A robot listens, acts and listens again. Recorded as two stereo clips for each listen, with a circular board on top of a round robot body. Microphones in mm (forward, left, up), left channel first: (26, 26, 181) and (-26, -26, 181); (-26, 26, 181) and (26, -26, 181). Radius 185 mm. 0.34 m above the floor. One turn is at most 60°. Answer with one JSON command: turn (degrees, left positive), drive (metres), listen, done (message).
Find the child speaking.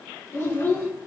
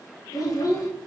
{"turn": 60}
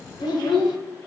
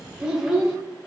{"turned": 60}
{"turn": 35}
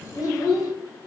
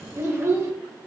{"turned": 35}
{"done": "Facing the child speaking."}